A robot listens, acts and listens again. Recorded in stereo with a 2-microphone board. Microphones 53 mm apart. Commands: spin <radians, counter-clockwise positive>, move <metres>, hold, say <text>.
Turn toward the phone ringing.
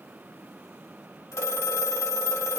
spin 1.22
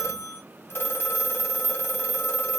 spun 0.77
spin 0.87
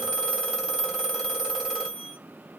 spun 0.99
spin -0.17
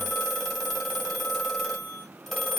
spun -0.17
say Found it: a phone ringing, straight ahead.